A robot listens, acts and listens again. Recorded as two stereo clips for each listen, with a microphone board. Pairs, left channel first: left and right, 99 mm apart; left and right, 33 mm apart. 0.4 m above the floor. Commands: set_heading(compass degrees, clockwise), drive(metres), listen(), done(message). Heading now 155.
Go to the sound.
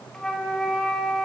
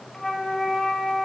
set_heading(125)
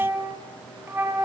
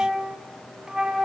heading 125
set_heading(150)
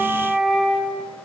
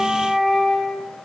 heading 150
drive(1.0)
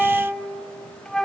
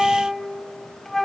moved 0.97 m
drive(1.0)
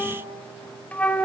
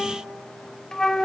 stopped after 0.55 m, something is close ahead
set_heading(135)
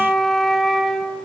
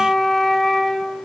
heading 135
done("I am next to the flute.")